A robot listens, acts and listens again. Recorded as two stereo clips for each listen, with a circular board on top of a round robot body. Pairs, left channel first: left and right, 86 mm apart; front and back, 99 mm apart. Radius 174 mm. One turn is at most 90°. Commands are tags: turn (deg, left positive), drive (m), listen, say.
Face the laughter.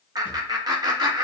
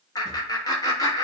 <turn deg="-50"/>
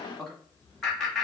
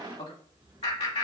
<say>Found it: laughter, straight ahead.</say>